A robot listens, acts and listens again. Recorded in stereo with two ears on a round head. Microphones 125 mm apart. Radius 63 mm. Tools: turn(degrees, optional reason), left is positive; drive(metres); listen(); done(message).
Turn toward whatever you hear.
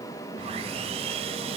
turn(degrees=-45, reason="The sawing: about 45° right or 135° right.")
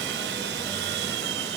turn(degrees=-90, reason="So it is at 90° right.")
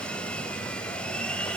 done("Found it: sawing, straight ahead.")